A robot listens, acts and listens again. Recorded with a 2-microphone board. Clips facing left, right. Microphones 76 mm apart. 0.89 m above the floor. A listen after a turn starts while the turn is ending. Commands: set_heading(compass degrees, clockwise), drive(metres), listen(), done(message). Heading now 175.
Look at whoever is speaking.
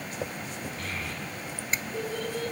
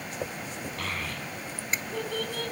set_heading(265)
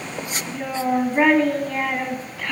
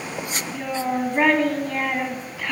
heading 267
done("Found it: a child speaking, straight ahead.")